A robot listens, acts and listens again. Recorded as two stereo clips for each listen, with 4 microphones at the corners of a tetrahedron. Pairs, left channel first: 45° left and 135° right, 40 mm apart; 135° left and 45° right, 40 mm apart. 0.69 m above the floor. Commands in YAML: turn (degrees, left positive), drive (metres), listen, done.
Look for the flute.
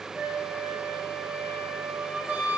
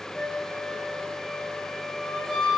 turn: -140
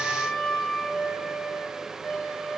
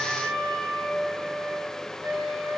turn: -40
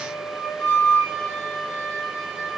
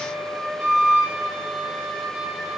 done: "Found it: a flute, straight ahead."